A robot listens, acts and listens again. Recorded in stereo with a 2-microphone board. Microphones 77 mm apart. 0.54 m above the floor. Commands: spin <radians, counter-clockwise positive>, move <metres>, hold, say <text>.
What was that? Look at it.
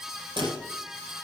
spin -1.57
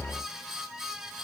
say I heard a dropped coin from this way, but can't make it out now.